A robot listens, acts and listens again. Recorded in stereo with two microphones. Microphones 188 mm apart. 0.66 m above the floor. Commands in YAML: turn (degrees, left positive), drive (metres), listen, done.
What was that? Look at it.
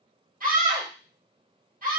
turn: -50
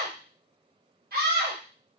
turn: -70
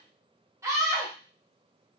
turn: -20
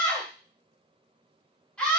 done: "Facing the scream, 1 to 2 m away."